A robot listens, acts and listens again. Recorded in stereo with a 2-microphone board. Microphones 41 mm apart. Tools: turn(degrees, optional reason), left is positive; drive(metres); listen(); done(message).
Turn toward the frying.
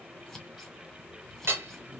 listen()
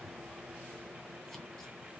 listen()
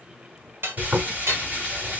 turn(degrees=-35, reason="The frying: about 35° right or 145° right.")
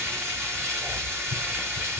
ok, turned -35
turn(degrees=-105, reason="So it is at 105° right.")
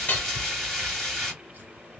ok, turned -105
done("Found it: frying, straight ahead.")